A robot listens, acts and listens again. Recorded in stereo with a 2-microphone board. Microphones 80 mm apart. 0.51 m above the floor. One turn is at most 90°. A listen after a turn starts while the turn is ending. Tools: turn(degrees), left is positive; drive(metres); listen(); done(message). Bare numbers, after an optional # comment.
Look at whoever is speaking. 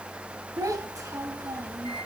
# The child speaking: about 45° right or 135° right.
turn(-45)
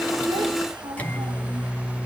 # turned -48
# So it is at 85° right.
turn(-85)
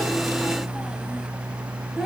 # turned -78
done("Found it: a child speaking, straight ahead.")